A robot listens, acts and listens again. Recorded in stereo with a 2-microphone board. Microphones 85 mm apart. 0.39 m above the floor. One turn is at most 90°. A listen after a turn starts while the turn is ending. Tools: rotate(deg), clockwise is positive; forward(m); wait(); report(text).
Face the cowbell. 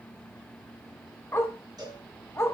rotate(45)
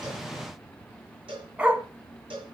rotate(85)
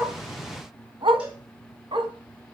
wait()
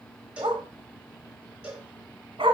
rotate(15)
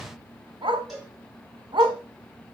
report("Facing the cowbell.")